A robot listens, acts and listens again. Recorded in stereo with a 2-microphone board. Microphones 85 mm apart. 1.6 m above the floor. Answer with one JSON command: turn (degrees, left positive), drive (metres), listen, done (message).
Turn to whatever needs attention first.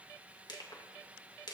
{"listen": true}
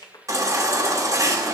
{"turn": -40}
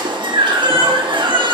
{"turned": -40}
{"turn": -95}
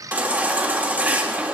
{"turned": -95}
{"turn": -20}
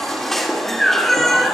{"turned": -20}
{"done": "Facing the baby crying."}